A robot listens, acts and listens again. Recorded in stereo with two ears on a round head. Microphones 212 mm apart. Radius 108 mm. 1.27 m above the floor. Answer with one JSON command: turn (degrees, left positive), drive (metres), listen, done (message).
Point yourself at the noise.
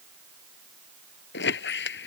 {"turn": 50}
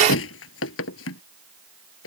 {"turn": 70}
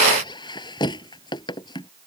{"turn": 20}
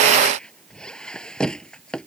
{"done": "Found it: a squeak, straight ahead."}